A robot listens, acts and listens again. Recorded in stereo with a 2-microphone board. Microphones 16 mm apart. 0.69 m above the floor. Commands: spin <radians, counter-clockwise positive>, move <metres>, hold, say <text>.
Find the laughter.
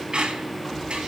hold
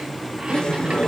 spin 1.13
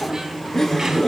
spin 0.44
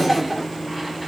spin -0.17
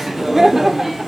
spin -0.26
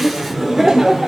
spin -0.26
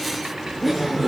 say Facing the laughter.